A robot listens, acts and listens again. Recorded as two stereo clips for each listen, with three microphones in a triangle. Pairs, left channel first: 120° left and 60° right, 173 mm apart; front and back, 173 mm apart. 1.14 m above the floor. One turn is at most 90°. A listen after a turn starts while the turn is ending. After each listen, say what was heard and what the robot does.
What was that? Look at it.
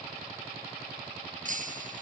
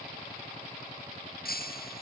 The breaking glass: 25° right. Turn 25° right.
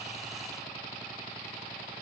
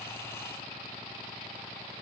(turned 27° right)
I heard breaking glass from this way, but can't make it out now.